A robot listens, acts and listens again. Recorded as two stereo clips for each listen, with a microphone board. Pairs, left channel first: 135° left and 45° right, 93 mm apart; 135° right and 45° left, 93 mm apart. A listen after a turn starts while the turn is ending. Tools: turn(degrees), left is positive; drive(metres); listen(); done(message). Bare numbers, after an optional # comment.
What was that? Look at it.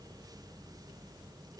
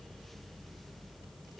listen()
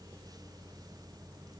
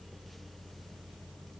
listen()
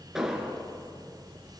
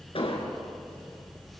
# The explosion: 130° right.
turn(-130)
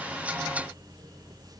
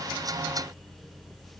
done("Facing where the explosion came from. I can't hear it now.")